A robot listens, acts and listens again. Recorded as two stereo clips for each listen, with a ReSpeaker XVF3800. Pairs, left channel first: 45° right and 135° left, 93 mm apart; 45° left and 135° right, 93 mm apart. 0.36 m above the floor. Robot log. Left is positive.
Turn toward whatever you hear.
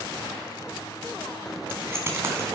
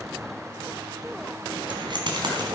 note: The keys jangling: 165° right.
cmd yaw -165
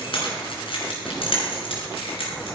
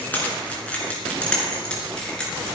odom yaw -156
note: The keys jangling is now 35° right.
cmd yaw -35
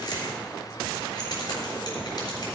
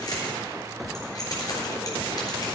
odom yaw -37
end: Found it: keys jangling, straight ahead, over 4 m away.